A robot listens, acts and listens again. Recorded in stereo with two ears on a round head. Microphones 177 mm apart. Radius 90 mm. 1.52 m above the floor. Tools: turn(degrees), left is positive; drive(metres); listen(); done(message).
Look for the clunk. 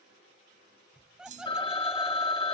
turn(degrees=-40)
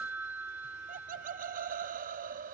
listen()
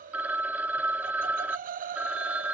done("I heard a clunk, but can't make it out now. It was about straight ahead or 100° right.")